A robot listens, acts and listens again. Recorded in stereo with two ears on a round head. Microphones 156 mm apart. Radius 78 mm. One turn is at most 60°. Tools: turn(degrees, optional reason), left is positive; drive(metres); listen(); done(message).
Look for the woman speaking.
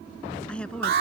turn(degrees=30)
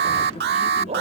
listen()
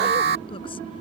listen()
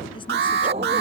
done("I heard a woman speaking, but can't make it out now. It was about 25° right or 145° left.")